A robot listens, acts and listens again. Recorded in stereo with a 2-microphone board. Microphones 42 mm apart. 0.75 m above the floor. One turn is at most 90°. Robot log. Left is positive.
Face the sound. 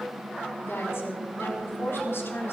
cmd yaw +90
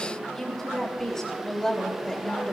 note: So it is at 15° left.
cmd yaw +15
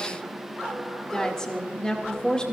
note: The woman speaking is now 20° left.
cmd yaw +20
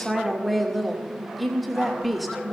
end: Facing the woman speaking.